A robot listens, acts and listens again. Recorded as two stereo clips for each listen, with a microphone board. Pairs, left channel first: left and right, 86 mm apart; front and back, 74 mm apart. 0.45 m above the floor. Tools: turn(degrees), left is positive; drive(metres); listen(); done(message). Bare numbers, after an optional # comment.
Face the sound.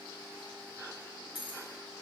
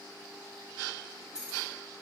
# The keys jangling: 100° left.
turn(100)
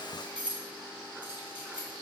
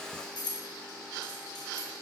# The keys jangling is now 15° right.
turn(-15)
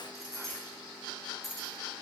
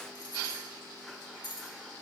done("Found it: keys jangling, straight ahead, 1 to 2 m away.")